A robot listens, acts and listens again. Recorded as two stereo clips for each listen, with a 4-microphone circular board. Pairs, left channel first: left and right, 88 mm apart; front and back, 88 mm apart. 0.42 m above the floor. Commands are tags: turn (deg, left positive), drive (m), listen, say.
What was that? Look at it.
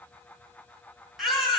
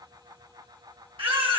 <turn deg="180"/>
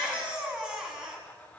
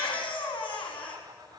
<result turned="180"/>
<turn deg="-10"/>
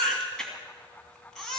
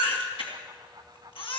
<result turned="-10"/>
<say>Found it: a baby crying, straight ahead, 2 to 4 m away.</say>